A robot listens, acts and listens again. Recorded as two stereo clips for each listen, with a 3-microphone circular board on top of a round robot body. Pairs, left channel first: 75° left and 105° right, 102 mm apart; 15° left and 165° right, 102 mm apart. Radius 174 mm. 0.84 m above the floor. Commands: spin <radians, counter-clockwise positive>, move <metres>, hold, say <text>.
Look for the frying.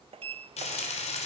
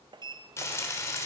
spin 1.31
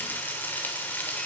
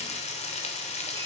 say Facing the frying.